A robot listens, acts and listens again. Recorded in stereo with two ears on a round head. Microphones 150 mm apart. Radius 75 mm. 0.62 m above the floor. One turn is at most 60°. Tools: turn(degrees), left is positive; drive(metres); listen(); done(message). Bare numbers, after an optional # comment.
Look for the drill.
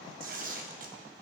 listen()
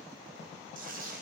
listen()
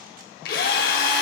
# The drill: about 60° left or 120° left.
turn(60)
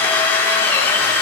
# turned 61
# So it is at 15° left.
turn(15)
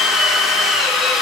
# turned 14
done("Found it: a drill, straight ahead, 1 to 2 m away.")